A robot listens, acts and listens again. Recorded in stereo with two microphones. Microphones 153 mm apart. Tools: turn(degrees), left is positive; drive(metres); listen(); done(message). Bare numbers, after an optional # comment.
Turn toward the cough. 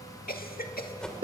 turn(90)
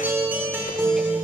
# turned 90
listen()
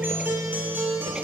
listen()
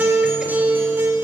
done("Facing where the cough came from. I can't hear it now.")